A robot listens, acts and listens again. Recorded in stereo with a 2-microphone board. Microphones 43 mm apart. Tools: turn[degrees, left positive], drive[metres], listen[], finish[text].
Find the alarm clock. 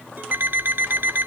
Thought: The alarm clock: about 60° right or 120° right.
Action: turn[-60]
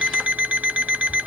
Thought: So it is at 40° right.
Action: turn[-40]
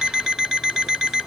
Thought: The alarm clock is now 10° right.
Action: turn[-10]
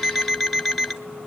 Action: finish[Facing the alarm clock.]